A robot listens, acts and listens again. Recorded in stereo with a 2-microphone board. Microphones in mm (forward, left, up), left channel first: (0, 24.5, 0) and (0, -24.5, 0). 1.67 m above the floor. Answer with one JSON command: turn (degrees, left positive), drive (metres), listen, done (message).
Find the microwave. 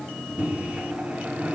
{"turn": -25}
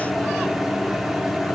{"done": "Facing the microwave."}